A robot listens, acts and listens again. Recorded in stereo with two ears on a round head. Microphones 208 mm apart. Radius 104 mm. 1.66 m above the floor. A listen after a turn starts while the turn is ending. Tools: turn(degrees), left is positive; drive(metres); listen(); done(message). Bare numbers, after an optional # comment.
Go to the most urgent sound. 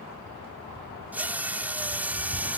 listen()
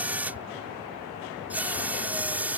listen()
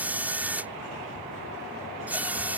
done("I can't make out anything urgent to turn to.")